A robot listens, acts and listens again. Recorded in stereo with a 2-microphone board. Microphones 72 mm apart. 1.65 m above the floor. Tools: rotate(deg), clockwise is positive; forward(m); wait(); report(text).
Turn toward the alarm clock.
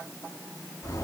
wait()
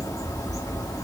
wait()
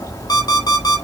rotate(-75)
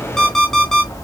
report("Found it: an alarm clock, straight ahead.")